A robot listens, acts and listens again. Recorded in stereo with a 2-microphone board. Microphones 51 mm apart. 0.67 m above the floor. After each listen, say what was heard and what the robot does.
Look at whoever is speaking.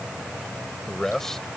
Turn 30° left.
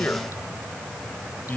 So it is at 145° left. Turn 145° left.
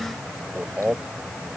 The man speaking is now 25° right. Turn 25° right.
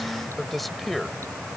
Facing the man speaking.